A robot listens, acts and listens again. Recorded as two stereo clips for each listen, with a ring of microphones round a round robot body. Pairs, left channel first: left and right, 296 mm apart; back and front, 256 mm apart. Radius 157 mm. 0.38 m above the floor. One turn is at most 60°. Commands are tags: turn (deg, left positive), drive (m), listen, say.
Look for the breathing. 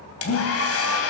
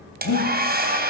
<turn deg="60"/>
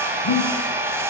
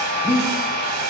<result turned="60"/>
<turn deg="60"/>
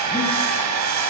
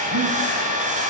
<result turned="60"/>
<turn deg="15"/>
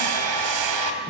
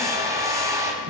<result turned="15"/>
<listen/>
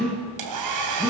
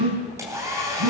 <say>Found it: breathing, straight ahead, over 4 m away.</say>